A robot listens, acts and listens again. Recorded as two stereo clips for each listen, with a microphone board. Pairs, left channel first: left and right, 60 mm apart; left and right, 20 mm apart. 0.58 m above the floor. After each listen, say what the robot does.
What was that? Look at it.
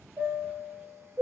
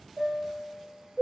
Turn 40° right.
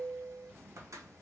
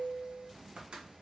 Turn 90° right.
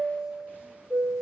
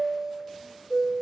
Turn 15° right.
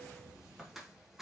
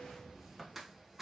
Found it: a chime, straight ahead, under 1 m away.